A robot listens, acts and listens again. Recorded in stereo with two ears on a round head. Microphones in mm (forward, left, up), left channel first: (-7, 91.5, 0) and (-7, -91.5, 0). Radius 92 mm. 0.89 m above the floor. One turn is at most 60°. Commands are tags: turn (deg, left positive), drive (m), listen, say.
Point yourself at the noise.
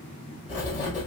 <turn deg="40"/>
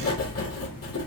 <turn deg="60"/>
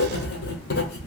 <turn deg="45"/>
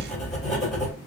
<say>Found it: writing, straight ahead.</say>